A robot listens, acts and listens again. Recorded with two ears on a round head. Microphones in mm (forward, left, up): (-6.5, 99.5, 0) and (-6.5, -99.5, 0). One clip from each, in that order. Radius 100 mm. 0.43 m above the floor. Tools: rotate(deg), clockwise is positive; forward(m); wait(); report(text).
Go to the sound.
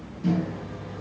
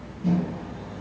rotate(-45)
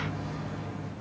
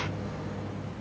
rotate(-85)
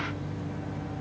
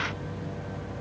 forward(1.0)
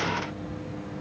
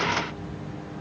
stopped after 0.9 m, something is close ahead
rotate(-10)
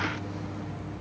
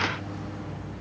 report("Arrived at the microwave, straight ahead.")